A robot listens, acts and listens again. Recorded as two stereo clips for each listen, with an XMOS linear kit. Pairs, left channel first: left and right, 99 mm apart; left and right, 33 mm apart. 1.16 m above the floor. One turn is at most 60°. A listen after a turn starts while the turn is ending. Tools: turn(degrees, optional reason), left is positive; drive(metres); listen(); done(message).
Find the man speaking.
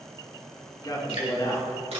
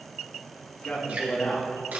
turn(degrees=40, reason="The man speaking: about 40° left or 140° left.")
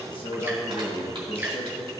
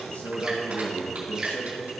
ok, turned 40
turn(degrees=60, reason="So it is at 95° left.")
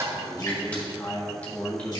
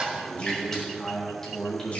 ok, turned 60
turn(degrees=25, reason="The man speaking is now 25° left.")
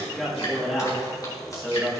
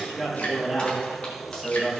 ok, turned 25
done("Found it: a man speaking, straight ahead, 1 to 2 m away.")